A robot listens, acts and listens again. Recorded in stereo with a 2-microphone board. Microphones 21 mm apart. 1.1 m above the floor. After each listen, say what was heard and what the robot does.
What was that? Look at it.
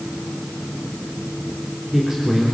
Turn 30° right.
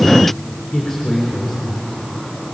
So it is at 15° left. Turn 15° left.
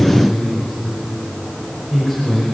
Found it: a man speaking, straight ahead, over 4 m away.